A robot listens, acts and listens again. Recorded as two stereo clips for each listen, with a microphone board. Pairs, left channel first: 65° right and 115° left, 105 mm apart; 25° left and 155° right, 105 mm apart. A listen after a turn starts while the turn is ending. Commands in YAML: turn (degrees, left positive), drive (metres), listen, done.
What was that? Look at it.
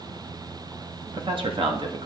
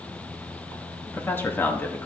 turn: 90
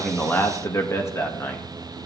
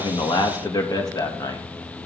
turn: -10
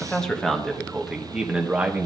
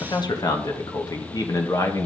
turn: 50
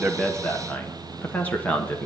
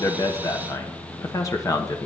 done: "Found it: a man speaking, straight ahead, 1 to 2 m away."